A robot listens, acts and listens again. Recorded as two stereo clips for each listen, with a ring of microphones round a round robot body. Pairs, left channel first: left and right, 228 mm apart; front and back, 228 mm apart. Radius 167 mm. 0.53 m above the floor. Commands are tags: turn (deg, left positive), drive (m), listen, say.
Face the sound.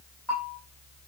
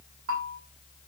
<turn deg="175"/>
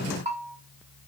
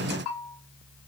<turn deg="-30"/>
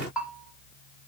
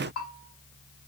<say>Found it: a bell, straight ahead, over 4 m away.</say>